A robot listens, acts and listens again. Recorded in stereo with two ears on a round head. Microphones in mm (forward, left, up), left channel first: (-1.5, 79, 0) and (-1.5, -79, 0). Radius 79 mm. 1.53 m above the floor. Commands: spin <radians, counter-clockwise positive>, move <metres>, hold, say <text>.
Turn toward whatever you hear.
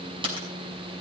spin -0.52
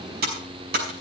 spin -2.09
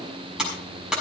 say Facing the typing on a keyboard, over 4 m away.